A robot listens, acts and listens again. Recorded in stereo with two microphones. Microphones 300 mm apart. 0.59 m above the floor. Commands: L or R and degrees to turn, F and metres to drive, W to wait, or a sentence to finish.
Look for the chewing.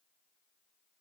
W
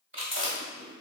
R40
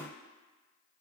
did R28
W
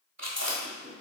R100
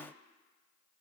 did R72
R30
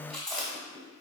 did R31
Facing the chewing, 1 to 2 m away.